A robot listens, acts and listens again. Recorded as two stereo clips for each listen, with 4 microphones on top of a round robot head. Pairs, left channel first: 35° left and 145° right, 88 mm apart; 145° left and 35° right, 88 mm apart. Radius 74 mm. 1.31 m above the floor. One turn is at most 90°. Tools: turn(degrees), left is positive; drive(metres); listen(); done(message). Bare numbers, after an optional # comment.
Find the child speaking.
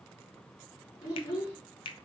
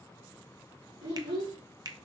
# The child speaking: 20° right.
turn(-20)
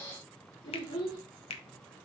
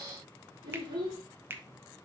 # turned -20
done("Found it: a child speaking, straight ahead, over 4 m away.")